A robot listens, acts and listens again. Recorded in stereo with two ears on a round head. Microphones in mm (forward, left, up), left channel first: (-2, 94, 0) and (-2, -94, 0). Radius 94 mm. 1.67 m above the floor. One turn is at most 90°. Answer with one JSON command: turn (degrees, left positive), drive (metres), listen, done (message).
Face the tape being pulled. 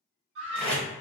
{"turn": 30}
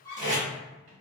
{"turn": -25}
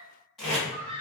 {"done": "Found it: tape being pulled, straight ahead."}